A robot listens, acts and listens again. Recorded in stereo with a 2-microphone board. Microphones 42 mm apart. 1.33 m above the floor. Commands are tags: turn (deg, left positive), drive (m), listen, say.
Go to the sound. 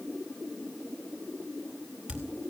<turn deg="-25"/>
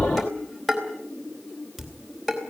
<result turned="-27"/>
<drive m="1.0"/>
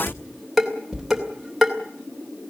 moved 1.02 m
<drive m="1.0"/>
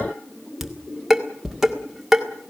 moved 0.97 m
<turn deg="-10"/>
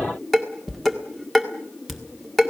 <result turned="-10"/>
<drive m="1.0"/>
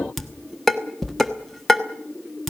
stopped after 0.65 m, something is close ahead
<say>I am next to the dishes clattering.</say>